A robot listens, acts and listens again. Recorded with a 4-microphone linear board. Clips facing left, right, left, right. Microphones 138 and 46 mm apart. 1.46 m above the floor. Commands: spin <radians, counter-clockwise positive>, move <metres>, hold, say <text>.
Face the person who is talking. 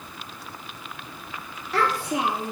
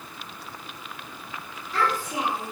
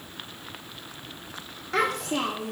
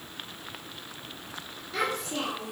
spin 1.13
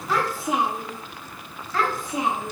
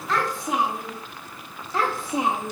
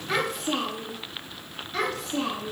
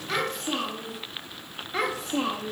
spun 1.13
spin -0.70
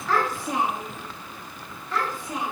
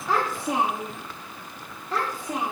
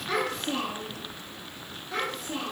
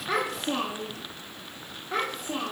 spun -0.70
spin -0.61
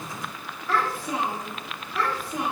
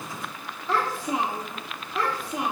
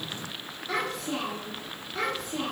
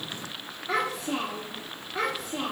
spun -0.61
spin -0.44
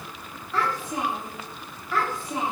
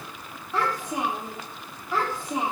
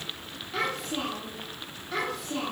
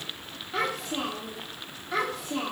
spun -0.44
spin -0.26
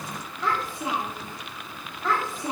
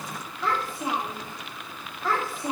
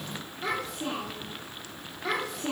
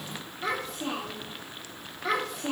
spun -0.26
say Found it: a child speaking, straight ahead, 1 to 2 m away.